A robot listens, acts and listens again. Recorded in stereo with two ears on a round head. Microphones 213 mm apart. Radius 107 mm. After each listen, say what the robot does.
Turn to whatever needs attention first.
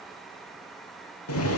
Keep listening.
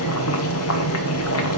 Keep listening.
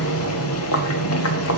I can't make out anything urgent to turn to.